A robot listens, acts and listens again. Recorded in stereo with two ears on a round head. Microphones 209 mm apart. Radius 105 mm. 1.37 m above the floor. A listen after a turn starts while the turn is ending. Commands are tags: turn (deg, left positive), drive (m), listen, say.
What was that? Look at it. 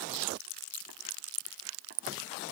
<listen/>
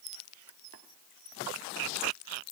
<listen/>
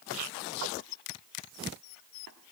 <say>I can't make out anything.</say>